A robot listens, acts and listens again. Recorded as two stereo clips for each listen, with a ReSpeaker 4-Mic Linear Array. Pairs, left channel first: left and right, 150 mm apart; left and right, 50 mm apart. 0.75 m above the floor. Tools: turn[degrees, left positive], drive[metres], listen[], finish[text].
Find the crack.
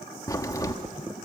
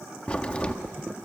Thought: The crack: about 20° left or 160° left.
Action: turn[20]
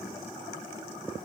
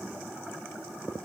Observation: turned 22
Action: listen[]
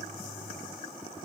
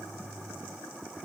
Action: finish[I heard a crack, but can't make it out now. It was about straight ahead or 135° left.]